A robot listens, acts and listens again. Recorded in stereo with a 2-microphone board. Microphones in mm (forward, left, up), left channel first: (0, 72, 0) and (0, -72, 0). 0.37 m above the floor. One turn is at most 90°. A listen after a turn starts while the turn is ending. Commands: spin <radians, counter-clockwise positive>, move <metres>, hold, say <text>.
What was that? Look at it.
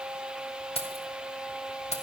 spin 0.87
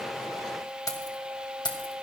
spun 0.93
spin 0.61
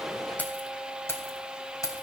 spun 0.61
spin 0.44
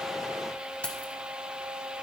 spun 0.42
spin 0.17
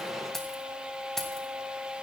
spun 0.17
say Found it: keys jangling, straight ahead.